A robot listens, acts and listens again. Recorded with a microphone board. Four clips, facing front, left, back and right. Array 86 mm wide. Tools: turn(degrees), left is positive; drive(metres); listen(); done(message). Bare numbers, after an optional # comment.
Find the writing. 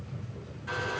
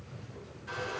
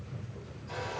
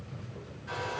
listen()
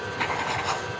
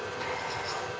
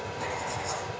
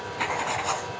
# The writing: 40° right.
turn(-40)
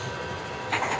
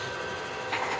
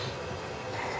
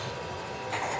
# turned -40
# The writing is now 10° left.
turn(10)
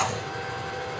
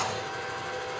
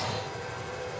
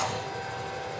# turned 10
done("Facing the writing.")